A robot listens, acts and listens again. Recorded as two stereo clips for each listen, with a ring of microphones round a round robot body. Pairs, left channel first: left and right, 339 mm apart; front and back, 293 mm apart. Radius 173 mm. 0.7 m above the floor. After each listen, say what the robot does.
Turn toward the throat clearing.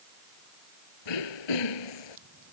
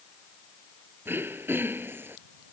Turn 95° left.
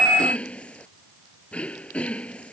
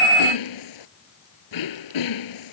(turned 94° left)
Found it: throat clearing, straight ahead.